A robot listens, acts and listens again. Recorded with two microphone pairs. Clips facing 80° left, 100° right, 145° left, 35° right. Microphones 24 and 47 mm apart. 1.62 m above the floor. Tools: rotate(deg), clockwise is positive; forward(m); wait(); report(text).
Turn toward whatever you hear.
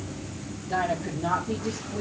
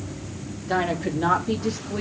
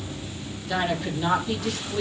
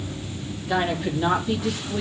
rotate(110)
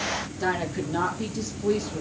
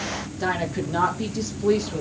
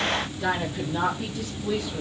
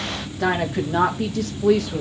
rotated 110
rotate(40)
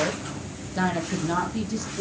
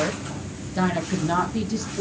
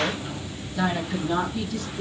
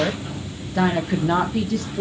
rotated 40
rotate(30)
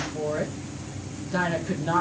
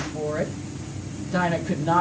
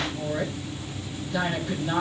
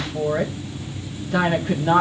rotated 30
rotate(10)
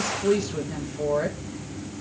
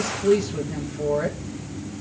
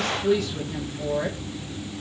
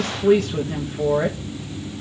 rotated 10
report("Facing the woman speaking.")